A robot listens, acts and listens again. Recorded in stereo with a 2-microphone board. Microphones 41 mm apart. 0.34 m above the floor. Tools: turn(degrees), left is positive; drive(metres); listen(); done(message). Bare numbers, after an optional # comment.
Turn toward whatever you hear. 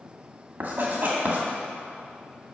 # The writing: about 50° right or 130° right.
turn(-50)
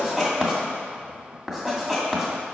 # So it is at 10° right.
turn(-10)
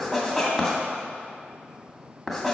done("Facing the writing.")